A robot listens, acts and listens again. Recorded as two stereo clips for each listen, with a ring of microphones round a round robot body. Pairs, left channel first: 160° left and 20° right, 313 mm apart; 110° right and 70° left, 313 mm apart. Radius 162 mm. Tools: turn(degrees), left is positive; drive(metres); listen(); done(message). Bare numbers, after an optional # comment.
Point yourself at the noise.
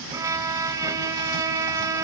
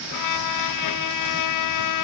# The violin: 100° right.
turn(-100)
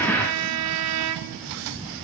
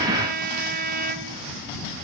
# The violin is now 10° left.
turn(10)
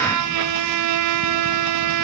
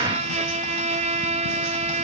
done("Facing the violin.")